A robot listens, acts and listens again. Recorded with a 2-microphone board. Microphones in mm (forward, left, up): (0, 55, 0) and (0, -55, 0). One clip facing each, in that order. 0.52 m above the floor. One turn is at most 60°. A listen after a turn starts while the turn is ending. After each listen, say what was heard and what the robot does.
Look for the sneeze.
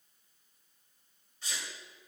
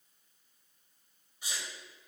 Turn 30° right.
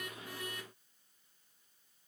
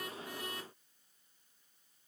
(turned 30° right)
Keep listening.
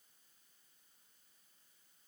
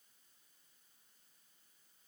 I heard a sneeze, but can't make it out now. It was about 20° left or 140° right.